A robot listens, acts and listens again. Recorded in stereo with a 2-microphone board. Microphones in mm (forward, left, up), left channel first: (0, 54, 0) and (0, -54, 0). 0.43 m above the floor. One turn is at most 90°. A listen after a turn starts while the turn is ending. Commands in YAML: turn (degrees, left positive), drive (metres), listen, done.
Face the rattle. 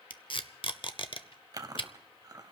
listen: true
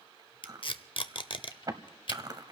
listen: true
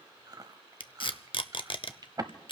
done: "I can't make out a rattle to turn to."